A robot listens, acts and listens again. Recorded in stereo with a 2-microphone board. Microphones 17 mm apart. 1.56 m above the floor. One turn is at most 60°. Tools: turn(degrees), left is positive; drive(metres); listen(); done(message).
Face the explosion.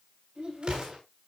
turn(degrees=-60)
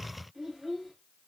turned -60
listen()
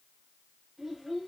done("I heard an explosion, but can't make it out now. It was about 10° right or 50° right.")